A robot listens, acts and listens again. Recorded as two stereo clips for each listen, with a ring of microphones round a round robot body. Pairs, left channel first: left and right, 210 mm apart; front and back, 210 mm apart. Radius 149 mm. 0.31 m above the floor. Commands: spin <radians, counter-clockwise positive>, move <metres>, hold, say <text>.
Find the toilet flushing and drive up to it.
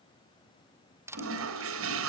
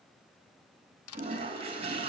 spin -1.92
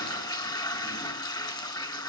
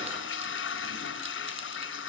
spin 0.35
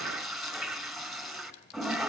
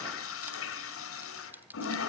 move 1.0
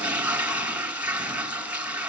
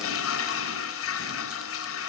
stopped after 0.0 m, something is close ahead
say Blocked. The toilet flushing is further on, straight ahead.